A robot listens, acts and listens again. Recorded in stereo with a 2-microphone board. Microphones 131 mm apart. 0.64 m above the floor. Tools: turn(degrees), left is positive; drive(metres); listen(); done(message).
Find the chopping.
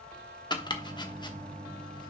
turn(degrees=35)
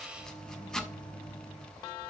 done("Facing the chopping, 1 to 2 m away.")